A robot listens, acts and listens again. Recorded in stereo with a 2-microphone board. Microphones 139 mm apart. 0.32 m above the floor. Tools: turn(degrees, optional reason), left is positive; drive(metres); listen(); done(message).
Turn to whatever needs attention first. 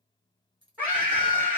turn(degrees=-30)
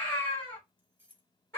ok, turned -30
turn(degrees=20, reason="So it is at 20° left.")
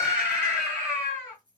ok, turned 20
done("Found it: a scream, straight ahead, 1 to 2 m away.")